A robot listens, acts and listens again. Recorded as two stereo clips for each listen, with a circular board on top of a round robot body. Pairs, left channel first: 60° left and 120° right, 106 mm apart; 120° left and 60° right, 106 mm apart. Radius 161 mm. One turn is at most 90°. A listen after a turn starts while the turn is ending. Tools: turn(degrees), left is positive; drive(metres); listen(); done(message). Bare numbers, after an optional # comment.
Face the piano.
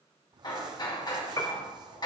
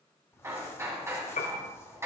# The piano: 120° left.
turn(90)
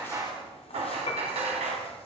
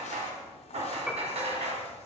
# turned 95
# The piano is now 25° left.
turn(25)
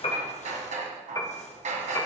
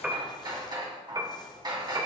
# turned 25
done("Found it: a piano, straight ahead.")